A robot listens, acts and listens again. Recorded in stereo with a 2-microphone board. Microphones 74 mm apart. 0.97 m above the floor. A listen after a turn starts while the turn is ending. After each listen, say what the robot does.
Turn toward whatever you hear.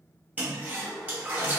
Turn 25° right.
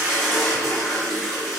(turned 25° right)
Found it: a toilet flushing, straight ahead, under 1 m away.